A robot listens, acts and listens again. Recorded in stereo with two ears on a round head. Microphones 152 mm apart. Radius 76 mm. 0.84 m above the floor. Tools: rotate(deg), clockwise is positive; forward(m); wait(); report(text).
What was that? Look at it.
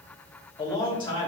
rotate(-30)
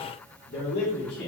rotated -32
rotate(-110)
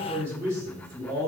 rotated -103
rotate(20)
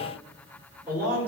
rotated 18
rotate(10)
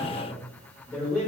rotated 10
report("Found it: a man speaking, straight ahead, 2 to 4 m away.")